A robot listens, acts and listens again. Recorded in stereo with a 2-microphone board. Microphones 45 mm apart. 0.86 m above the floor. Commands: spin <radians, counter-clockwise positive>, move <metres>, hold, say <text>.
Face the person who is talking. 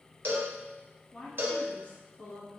spin 0.96
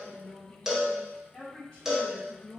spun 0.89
spin 0.52
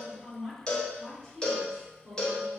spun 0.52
say Found it: a woman speaking, straight ahead.